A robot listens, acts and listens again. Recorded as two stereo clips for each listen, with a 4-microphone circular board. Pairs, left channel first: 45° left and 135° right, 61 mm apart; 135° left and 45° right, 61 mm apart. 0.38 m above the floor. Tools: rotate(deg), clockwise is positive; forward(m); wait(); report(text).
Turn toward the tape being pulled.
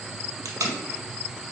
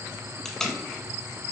rotate(145)
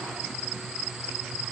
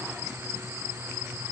wait()
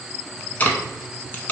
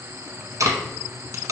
rotate(15)
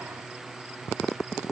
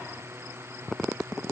wait()
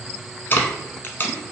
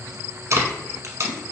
rotate(10)
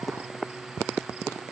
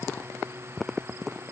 wait()
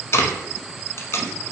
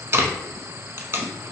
report("Found it: tape being pulled, straight ahead.")